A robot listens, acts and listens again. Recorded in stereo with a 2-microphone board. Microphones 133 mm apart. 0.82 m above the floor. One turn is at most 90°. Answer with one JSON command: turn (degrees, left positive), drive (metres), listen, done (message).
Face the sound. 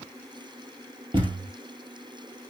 {"turn": -40}
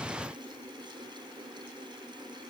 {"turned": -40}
{"listen": true}
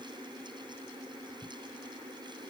{"done": "I heard a thud, but can't make it out now. It was about straight ahead or 100° right."}